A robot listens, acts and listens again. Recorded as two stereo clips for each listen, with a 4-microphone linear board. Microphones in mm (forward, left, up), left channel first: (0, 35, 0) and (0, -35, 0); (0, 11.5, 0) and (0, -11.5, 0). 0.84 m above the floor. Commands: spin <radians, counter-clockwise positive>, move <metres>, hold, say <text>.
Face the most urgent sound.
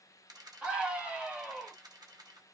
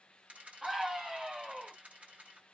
spin -0.26
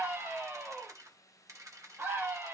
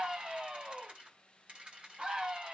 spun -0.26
spin -2.62
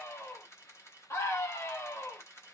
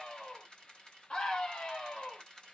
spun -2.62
spin 0.79
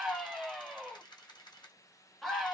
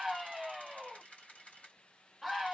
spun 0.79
say Found it: a scream, straight ahead, 1 to 2 m away.